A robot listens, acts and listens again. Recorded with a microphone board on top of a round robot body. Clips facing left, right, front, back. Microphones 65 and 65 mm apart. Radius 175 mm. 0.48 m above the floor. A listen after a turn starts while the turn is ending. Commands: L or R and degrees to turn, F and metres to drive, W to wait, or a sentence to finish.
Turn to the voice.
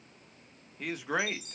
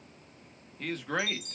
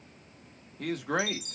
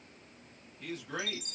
L10
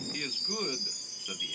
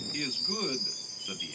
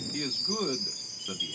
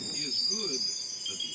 Found it: a man speaking, straight ahead, 1 to 2 m away.